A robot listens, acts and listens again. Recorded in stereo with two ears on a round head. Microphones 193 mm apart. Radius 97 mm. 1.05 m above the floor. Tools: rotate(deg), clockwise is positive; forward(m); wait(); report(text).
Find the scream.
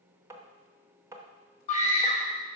rotate(-35)
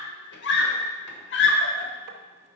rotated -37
rotate(-100)
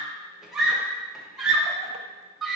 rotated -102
report("Facing the scream, 1 to 2 m away.")